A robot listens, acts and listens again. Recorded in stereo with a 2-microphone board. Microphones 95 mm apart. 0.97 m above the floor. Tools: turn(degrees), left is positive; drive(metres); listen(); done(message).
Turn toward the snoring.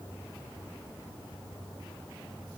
listen()
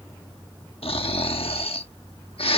turn(degrees=90)
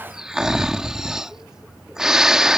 done("Found it: snoring, straight ahead.")